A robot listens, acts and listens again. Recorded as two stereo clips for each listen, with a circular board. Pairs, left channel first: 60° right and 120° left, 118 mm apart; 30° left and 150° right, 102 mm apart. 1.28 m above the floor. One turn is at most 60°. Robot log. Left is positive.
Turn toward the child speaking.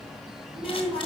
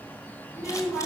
note: The child speaking: 120° left.
cmd yaw +60
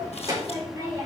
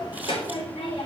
note: The child speaking is now 55° left.
cmd yaw +55
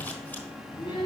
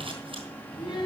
note: The child speaking is now 15° right.
cmd yaw -15
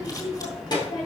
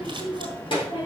note: The child speaking is now 10° right.
cmd yaw -10
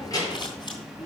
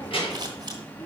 end: Facing the child speaking, over 4 m away.